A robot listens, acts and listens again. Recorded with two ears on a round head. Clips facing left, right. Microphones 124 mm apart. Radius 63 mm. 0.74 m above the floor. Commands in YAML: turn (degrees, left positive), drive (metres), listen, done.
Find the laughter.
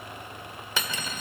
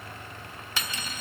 listen: true
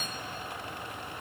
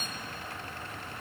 listen: true
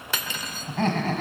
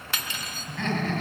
turn: 40
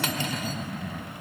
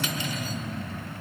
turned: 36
turn: 95
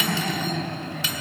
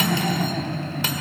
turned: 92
turn: -10
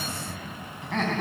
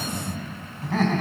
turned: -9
done: "Facing the laughter."